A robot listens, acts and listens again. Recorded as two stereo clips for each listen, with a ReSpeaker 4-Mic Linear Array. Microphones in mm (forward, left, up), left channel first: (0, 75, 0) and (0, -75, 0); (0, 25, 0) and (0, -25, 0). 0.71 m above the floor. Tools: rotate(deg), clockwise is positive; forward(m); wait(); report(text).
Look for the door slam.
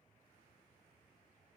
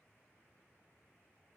wait()
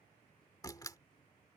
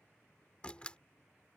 rotate(-25)
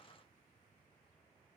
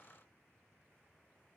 wait()
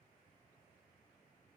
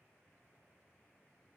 report("I heard a door slam, but can't make it out now. It was about straight ahead or 130° left.")